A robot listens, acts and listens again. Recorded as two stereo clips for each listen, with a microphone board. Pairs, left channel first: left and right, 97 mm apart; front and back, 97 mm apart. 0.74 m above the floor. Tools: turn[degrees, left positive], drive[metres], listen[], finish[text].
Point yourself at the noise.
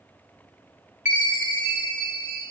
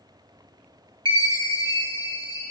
Thought: The chime: 160° right.
Action: turn[-160]
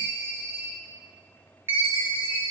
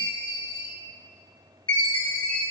Thought: The chime is now 25° right.
Action: turn[-25]
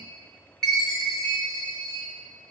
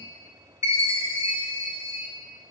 Action: finish[Facing the chime, under 1 m away.]